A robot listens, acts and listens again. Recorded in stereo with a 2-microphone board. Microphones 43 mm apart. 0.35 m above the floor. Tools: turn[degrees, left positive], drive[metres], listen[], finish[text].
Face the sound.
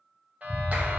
Thought: The clap: about 35° right or 145° right.
Action: turn[-35]
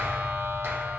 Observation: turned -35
Thought: So it is at 100° right.
Action: turn[-100]
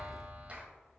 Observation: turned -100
Thought: The clap is now 35° right.
Action: turn[-35]
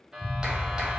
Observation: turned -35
Thought: The clap is now 20° right.
Action: turn[-20]
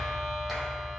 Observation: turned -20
Action: finish[Found it: a clap, straight ahead.]